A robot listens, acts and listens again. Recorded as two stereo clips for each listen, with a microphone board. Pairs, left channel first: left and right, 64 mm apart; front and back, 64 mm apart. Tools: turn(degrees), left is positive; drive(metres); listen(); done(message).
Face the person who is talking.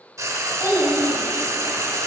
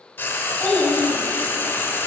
turn(degrees=75)
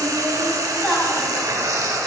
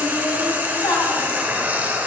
turn(degrees=10)
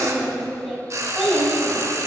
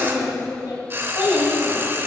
done("Facing the child speaking.")